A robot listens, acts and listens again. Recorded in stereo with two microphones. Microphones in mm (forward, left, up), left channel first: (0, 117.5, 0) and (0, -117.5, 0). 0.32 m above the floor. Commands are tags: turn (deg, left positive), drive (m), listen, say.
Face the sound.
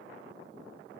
<listen/>
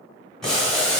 <turn deg="30"/>
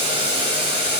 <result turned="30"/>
<turn deg="-25"/>
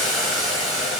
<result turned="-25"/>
<say>Found it: boiling, straight ahead.</say>